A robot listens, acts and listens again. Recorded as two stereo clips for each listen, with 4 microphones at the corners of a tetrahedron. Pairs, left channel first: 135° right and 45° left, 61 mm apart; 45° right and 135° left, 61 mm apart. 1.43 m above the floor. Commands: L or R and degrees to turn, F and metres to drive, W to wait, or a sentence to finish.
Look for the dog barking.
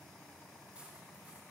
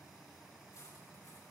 W
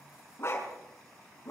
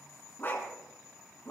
R95
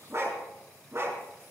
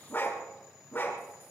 L10
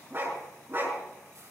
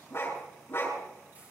Facing the dog barking, over 4 m away.